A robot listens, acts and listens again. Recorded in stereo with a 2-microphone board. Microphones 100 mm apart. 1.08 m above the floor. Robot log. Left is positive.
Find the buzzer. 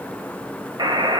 note: The buzzer: about 45° right or 135° right.
cmd yaw -45
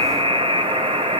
note: So it is at 90° right.
cmd yaw -90
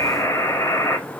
note: The buzzer is now 25° left.
cmd yaw +25
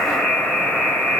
end: Facing the buzzer.